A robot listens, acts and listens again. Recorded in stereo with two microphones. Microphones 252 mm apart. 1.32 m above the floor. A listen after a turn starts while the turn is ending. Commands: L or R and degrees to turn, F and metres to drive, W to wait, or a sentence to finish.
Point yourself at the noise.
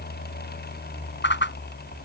L45
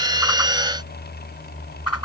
L85
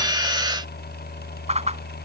R25
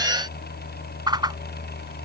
R15
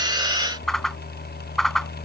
Found it: a whoosh, straight ahead.